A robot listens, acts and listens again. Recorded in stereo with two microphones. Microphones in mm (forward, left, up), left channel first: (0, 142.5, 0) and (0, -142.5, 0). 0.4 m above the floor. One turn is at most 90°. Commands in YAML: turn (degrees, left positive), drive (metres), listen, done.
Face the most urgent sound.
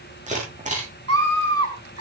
turn: -55
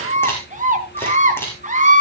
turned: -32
turn: -30
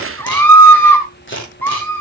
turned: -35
done: "Found it: a scream, straight ahead."